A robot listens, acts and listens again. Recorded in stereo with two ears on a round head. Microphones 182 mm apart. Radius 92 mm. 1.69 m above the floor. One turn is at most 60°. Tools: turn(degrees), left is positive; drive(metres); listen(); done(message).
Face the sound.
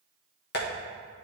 turn(degrees=50)
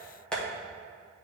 done("Facing the tapping.")